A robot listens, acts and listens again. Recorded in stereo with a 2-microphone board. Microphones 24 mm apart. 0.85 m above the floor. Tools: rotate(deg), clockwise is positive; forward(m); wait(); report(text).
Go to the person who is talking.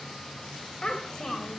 rotate(-35)
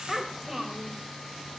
forward(1.0)
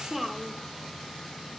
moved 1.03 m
forward(1.0)
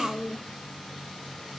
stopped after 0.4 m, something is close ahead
report("I am next to the child speaking.")